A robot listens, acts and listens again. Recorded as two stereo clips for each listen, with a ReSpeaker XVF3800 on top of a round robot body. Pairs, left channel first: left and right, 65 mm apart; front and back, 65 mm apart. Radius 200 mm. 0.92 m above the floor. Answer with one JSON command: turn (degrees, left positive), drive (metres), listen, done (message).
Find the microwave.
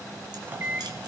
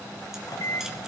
{"turn": -30}
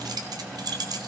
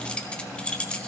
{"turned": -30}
{"listen": true}
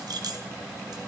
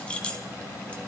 {"listen": true}
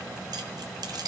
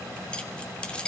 {"done": "I heard a microwave from this way, but can't make it out now."}